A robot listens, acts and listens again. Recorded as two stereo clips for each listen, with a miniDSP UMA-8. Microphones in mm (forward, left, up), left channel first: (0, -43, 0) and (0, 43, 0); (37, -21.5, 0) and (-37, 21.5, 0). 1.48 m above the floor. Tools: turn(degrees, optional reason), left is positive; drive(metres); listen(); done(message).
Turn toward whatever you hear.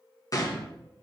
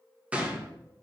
turn(degrees=-135, reason="The gunshot: 135° right.")
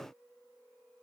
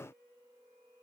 done("I heard a gunshot from this way, but can't make it out now.")